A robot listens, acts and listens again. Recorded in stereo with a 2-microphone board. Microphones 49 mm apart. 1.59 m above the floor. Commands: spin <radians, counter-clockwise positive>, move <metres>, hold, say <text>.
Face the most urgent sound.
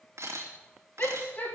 spin 0.61
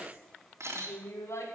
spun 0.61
spin 1.92
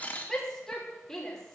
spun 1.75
spin 0.17
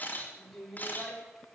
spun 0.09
say Facing the shout.